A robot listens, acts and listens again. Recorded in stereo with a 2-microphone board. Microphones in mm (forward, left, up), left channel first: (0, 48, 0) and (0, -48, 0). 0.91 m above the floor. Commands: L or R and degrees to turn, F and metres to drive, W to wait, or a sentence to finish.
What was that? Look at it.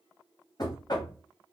L45
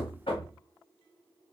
L85
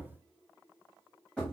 Facing the knocking.